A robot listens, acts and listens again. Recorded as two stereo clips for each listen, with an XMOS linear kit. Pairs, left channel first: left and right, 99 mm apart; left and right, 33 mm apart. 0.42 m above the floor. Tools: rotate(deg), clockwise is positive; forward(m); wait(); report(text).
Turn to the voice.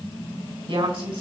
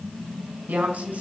rotate(75)
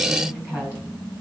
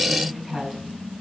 rotate(20)
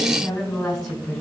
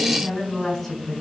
report("Found it: a woman speaking, straight ahead, over 4 m away.")